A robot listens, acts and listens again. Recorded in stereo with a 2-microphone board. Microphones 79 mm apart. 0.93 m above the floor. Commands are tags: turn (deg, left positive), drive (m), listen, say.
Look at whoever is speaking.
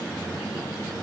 <listen/>
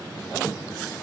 <listen/>
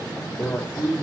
<turn deg="30"/>
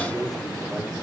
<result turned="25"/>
<listen/>
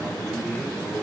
<say>Found it: a man speaking, straight ahead, 2 to 4 m away.</say>